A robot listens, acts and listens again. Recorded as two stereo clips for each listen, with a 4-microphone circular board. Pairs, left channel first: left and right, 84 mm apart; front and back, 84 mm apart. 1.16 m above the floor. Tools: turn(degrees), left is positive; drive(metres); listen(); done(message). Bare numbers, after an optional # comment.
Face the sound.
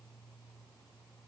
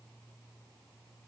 listen()
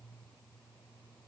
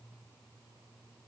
listen()
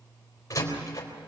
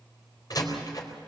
# The door slam: 40° left.
turn(40)
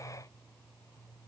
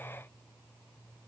done("Facing where the door slam came from. I can't hear it now.")